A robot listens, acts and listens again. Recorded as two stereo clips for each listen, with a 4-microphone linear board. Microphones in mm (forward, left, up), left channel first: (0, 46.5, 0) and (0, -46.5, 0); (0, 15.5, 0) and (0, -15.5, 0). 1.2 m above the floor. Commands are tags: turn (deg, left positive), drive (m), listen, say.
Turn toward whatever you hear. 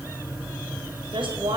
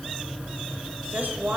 <turn deg="-65"/>
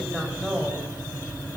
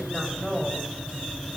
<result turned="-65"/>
<say>Facing the woman speaking, over 4 m away.</say>